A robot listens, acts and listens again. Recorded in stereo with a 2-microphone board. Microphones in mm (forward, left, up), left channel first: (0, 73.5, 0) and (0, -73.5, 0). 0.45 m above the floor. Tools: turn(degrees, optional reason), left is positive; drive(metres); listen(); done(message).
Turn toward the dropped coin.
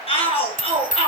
turn(degrees=60, reason="The dropped coin: about 60° left or 120° left.")
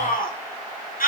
listen()
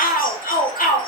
done("I heard a dropped coin, but can't make it out now. It was about straight ahead or 60° left.")